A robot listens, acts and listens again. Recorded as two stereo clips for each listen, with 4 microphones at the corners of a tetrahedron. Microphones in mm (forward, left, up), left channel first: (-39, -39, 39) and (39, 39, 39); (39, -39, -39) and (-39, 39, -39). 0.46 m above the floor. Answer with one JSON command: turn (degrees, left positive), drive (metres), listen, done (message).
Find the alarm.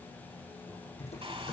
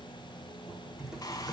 {"listen": true}
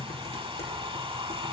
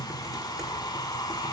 {"listen": true}
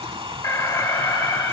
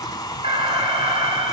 {"turn": 165}
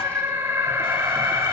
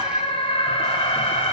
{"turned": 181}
{"turn": -15}
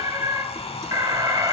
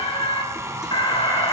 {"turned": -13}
{"done": "Found it: an alarm, straight ahead, 2 to 4 m away."}